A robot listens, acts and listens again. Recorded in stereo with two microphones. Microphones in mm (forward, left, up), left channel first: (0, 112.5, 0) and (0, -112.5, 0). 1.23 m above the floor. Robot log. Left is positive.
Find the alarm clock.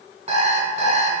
note: The alarm clock: about 30° right or 150° right.
cmd yaw -30
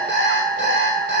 note: So it is at 120° right.
cmd yaw -120
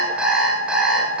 end: Found it: an alarm clock, straight ahead, over 4 m away.